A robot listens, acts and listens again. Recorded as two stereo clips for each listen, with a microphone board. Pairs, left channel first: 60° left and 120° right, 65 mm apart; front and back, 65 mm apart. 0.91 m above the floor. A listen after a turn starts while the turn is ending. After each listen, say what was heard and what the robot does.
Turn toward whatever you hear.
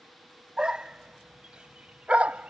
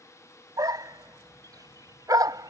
The dog barking: 170° left. Turn 170° left.
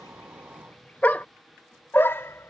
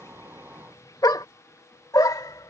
The dog barking is now 10° left. Turn 10° left.
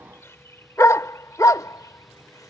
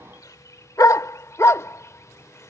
The dog barking is now 40° left. Turn 40° left.
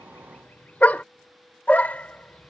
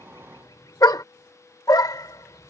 Facing the dog barking.